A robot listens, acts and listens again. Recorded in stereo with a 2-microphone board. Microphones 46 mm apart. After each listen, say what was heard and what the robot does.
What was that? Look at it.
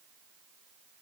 Keep listening.
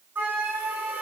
The flute: about 45° right or 135° right. Turn 45° right.
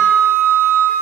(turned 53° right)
So it is at 80° right. Turn 80° right.
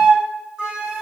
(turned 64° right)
The flute is now 15° right. Turn 15° right.
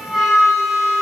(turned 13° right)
Found it: a flute, straight ahead.